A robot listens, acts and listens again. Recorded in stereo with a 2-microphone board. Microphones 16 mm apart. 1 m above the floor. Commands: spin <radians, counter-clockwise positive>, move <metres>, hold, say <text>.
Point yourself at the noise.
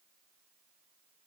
hold
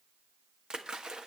spin -0.96
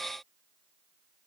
hold
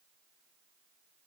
say I heard a splash, but can't make it out now. It was about straight ahead or 70° right.